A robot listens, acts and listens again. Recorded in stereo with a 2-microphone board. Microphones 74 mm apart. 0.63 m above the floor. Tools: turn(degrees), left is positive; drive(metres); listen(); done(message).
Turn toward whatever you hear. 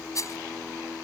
turn(degrees=45)
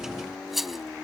done("Found it: a rattle, straight ahead.")